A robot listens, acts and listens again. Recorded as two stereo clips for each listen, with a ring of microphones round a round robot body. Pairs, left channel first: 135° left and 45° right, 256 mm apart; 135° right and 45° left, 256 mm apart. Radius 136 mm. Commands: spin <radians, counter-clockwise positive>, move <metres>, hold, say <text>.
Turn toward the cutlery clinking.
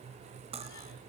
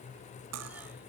spin 0.35
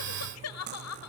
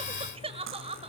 say Facing the cutlery clinking.